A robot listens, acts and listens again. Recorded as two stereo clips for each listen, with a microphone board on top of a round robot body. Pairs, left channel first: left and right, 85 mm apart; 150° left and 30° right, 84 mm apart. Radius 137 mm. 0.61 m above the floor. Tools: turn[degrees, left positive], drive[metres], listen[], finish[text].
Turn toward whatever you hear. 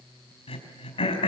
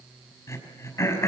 Thought: The throat clearing: 90° left.
Action: turn[90]
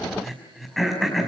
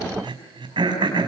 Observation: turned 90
Action: finish[Found it: throat clearing, straight ahead, over 4 m away.]